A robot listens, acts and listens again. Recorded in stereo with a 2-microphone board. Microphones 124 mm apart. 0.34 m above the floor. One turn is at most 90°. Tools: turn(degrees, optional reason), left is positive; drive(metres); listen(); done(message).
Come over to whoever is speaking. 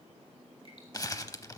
listen()
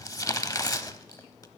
listen()
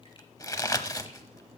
done("I can't make out anyone speaking, only crumpling.")